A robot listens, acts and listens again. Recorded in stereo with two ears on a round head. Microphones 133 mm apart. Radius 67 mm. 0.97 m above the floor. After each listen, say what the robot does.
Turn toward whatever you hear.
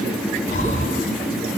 Turn 50° left.
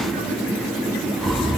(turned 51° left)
Found it: breathing, straight ahead, 2 to 4 m away.